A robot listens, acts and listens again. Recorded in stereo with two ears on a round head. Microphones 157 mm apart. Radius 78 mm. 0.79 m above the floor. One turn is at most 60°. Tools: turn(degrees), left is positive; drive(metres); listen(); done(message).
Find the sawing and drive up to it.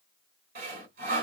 turn(degrees=-50)
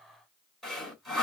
drive(metres=1.0)
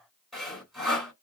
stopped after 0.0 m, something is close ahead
done("Blocked. The sawing is further on, straight ahead.")